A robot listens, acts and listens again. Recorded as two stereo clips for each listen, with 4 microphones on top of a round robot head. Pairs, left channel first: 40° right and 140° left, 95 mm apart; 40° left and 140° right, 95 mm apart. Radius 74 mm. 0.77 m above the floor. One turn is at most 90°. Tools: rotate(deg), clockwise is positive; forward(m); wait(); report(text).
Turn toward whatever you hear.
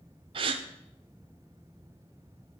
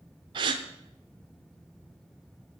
rotate(-90)
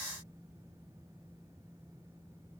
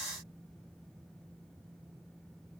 rotate(-90)
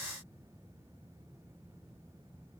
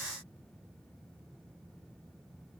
report("Facing where the gasp came from. I can't hear it now.")